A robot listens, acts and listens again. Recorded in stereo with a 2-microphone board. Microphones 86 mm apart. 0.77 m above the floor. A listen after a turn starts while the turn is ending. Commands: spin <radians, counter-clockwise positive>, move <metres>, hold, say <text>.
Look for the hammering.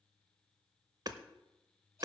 spin -0.87
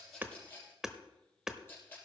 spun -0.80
say Found it: hammering, straight ahead, under 1 m away.